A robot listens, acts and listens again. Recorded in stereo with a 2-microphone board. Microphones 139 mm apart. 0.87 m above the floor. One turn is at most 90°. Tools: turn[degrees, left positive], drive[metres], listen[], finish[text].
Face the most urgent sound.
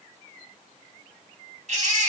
Thought: The baby crying: about 60° right or 120° right.
Action: turn[-60]
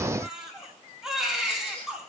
Action: finish[Facing the baby crying.]